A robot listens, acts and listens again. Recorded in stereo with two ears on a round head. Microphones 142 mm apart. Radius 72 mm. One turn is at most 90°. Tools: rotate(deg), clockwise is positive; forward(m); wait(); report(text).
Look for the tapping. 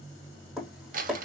rotate(30)
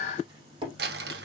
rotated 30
rotate(90)
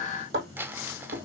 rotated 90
rotate(75)
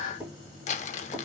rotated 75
wait()
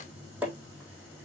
rotate(10)
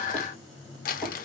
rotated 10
wait()
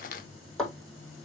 report("Found it: tapping, straight ahead.")